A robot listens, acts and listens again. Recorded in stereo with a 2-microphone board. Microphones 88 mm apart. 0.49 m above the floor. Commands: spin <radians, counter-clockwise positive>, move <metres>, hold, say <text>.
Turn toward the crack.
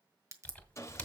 spin -0.70
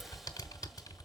hold
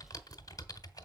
say I heard a crack, but can't make it out now. It was about straight ahead or 100° right.